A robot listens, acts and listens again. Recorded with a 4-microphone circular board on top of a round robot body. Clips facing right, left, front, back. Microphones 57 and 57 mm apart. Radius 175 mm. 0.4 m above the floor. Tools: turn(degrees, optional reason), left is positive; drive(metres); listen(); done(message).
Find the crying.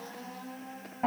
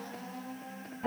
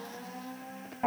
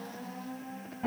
listen()
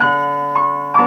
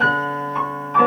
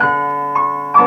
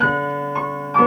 listen()
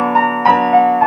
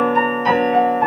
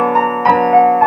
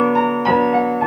done("I can't make out crying, only a piano.")